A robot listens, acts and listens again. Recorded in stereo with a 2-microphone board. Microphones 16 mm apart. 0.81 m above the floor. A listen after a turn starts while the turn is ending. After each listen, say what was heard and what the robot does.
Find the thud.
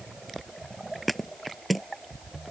Turn 30° left.
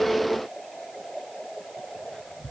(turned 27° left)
Keep listening.
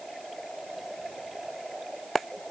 I heard a thud, but can't make it out now. It was about 30° right or 155° left.